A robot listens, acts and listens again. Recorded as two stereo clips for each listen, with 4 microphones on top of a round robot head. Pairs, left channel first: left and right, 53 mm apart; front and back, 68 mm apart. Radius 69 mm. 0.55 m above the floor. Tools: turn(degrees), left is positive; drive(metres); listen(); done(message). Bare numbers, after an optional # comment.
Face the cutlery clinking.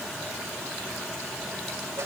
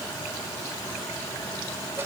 listen()
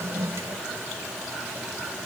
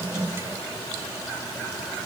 listen()
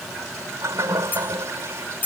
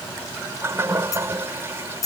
# The cutlery clinking: 35° left.
turn(35)
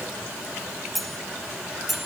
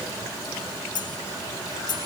done("Facing the cutlery clinking.")